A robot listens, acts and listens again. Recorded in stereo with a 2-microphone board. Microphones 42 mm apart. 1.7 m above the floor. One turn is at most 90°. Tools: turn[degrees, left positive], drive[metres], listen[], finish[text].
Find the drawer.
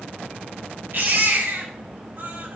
Action: listen[]
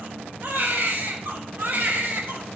Action: listen[]
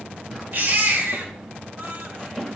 Action: turn[30]
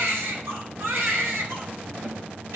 Action: listen[]
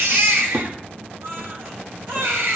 Thought: So it is at 35° right.
Action: turn[-35]
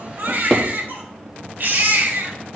Action: finish[Facing the drawer, 1 to 2 m away.]